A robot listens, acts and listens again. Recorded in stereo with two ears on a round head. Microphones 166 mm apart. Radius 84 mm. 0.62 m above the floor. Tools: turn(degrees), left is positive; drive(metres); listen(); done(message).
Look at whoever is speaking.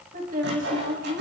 turn(degrees=-45)
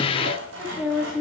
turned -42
done("Facing the woman speaking.")